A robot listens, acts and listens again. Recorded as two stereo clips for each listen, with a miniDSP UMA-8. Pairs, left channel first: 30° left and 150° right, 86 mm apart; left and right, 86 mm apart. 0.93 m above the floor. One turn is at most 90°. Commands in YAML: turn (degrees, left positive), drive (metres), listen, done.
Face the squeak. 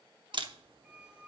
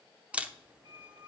turn: -80
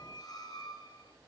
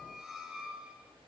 done: "Facing the squeak."